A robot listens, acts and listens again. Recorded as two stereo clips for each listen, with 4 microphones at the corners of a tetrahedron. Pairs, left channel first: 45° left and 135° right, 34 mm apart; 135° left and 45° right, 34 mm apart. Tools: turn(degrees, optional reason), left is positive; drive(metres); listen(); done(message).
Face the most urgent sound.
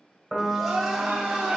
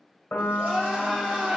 turn(degrees=-115, reason="The crying: 115° right.")
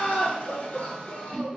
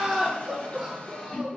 turn(degrees=30, reason="The crying is now 30° left.")
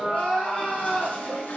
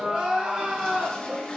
turn(degrees=10, reason="The crying is now 10° left.")
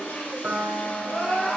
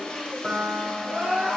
done("Facing the crying.")